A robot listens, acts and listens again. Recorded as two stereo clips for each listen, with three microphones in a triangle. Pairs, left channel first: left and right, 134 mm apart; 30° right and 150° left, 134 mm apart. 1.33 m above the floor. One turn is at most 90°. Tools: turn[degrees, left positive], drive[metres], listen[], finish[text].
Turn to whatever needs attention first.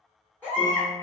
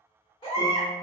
Thought: The baby crying: 15° left.
Action: turn[15]
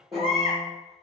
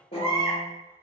Action: finish[Found it: a baby crying, straight ahead, 2 to 4 m away.]